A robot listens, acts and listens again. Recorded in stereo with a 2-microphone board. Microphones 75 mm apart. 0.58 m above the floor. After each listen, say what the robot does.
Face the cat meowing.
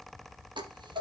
Keep listening.
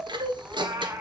Turn 30° right.
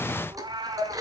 Turn 110° right.
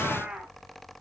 Turn 15° right.
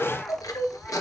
Keep listening.
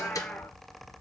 Turn 10° left.
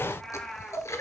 Turn 10° left.
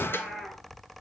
Facing the cat meowing, 2 to 4 m away.